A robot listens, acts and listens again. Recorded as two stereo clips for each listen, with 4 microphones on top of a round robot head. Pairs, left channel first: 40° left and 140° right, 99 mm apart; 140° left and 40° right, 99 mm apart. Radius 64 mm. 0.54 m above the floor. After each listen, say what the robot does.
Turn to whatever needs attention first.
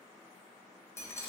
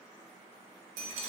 Keep listening.
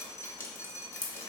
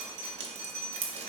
Keep listening.
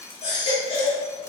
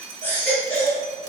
Turn 70° left.
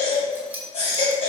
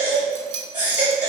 Turn 30° left.
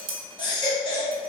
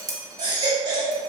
Found it: a baby crying, straight ahead.